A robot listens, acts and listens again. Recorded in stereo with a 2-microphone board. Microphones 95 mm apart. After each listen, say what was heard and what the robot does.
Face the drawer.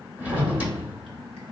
The drawer: about 15° right or 165° right. Turn 15° right.
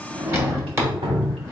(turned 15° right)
So it is at 150° right. Turn 150° right.
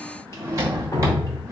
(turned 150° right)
The drawer is now 35° right. Turn 35° right.
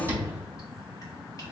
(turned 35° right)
The drawer is now 25° right. Turn 25° right.
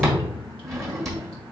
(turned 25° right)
Facing the drawer.